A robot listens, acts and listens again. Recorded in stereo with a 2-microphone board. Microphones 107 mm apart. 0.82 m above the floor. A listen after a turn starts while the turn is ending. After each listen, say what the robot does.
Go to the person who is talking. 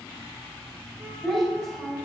Turn 30° left.
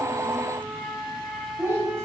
Turn 25° right.
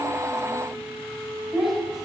Drive 1.0 m forward.
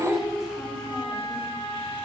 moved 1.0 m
Drive 1.0 m forward.
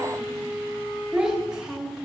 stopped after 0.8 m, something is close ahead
Arrived at the child speaking, straight ahead.